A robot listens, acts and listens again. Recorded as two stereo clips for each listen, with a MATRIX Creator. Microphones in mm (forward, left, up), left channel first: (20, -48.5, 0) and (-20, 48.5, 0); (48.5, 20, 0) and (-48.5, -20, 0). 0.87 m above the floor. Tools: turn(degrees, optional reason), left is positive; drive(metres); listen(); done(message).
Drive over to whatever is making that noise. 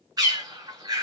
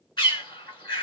turn(degrees=60, reason="The bird: 60° left.")
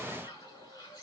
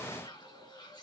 listen()
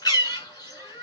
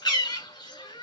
turn(degrees=-20, reason="The bird is now 20° right.")
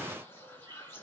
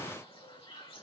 listen()
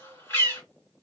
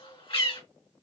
drive(metres=1.0)
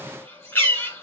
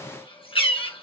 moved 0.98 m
drive(metres=1.0)
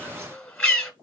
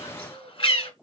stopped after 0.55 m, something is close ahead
turn(degrees=10, reason="The bird is now 10° left.")
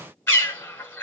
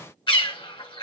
done("I am next to the bird.")